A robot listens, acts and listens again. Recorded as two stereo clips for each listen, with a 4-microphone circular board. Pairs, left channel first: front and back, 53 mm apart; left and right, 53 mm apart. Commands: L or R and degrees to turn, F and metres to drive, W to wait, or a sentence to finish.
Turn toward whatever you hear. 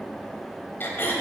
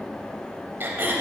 R45
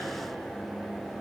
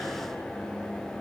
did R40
W
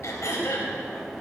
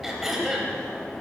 Facing the throat clearing.